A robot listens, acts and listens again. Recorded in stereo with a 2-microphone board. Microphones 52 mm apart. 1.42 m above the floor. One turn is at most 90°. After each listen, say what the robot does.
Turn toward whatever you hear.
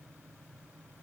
Keep listening.
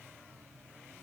Keep listening.
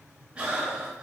Turn 25° right.
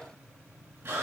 Turn 90° right.
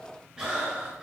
Turn 10° right.
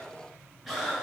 Facing the breathing.